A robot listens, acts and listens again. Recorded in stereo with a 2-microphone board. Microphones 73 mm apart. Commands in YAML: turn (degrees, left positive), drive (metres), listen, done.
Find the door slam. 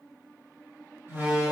turn: -35
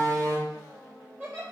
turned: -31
turn: -110
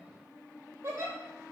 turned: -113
done: "Facing where the door slam came from. I can't hear it now."